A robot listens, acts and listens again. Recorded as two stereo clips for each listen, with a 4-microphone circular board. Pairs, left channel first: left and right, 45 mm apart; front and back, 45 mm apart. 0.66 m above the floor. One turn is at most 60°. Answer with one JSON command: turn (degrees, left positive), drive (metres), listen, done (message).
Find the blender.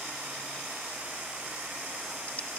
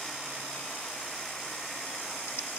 {"listen": true}
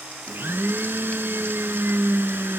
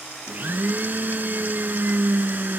{"turn": -60}
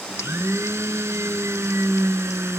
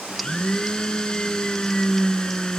{"turn": -60}
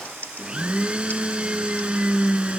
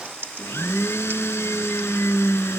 {"turn": -25}
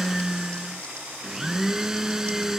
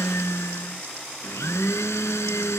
{"turn": -10}
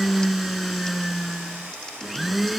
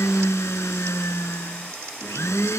{"done": "Found it: a blender, straight ahead."}